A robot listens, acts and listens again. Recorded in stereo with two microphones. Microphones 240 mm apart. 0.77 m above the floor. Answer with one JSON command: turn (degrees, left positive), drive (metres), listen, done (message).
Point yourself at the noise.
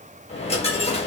{"turn": 25}
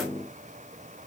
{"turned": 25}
{"listen": true}
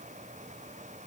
{"done": "I heard a dropped coin, but can't make it out now. It was about straight ahead or 130° left."}